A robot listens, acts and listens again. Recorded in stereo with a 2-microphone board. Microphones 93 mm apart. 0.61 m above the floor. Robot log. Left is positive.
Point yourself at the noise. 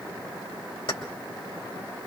note: The keys jangling: about 70° left or 110° left.
cmd yaw +70
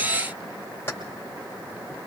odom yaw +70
note: So it is at 30° left.
cmd yaw +30
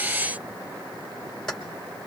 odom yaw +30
end: Facing the keys jangling, 2 to 4 m away.